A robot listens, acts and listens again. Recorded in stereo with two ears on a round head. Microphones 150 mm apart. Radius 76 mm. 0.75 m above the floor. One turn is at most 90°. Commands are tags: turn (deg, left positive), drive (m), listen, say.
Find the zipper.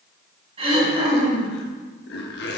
<turn deg="65"/>
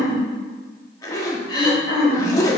<turn deg="20"/>
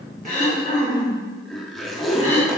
<say>Found it: a zipper, straight ahead, 1 to 2 m away.</say>